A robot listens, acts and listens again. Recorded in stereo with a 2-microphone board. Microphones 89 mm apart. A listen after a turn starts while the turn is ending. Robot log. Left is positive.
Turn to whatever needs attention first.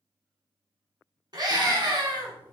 note: The scream: about 50° right or 130° right.
cmd yaw -50
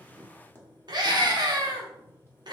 note: So it is at 70° right.
cmd yaw -70
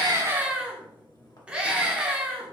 note: The scream is now 15° right.
cmd yaw -15
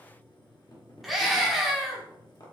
end: Found it: a scream, straight ahead, 1 to 2 m away.